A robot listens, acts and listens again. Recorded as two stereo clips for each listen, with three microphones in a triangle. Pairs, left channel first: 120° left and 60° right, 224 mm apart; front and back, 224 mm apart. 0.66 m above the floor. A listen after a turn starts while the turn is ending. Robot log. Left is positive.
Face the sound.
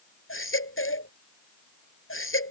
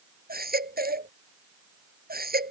note: The baby crying: 135° left.
cmd yaw +135
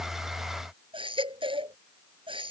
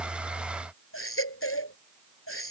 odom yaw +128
end: Facing the baby crying.